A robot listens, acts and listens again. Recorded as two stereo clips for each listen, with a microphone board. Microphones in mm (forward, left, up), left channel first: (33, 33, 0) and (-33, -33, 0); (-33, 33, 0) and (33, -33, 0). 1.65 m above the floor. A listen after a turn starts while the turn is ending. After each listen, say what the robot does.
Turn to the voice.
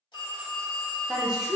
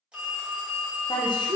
Turn 145° left.
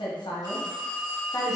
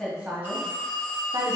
Found it: a woman speaking, straight ahead, 1 to 2 m away.